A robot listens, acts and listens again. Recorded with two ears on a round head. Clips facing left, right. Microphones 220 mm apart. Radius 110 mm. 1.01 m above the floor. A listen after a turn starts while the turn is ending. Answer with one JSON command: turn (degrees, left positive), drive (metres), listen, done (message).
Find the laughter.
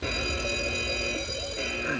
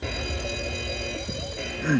{"turn": -45}
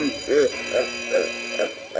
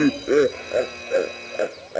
{"done": "Facing the laughter."}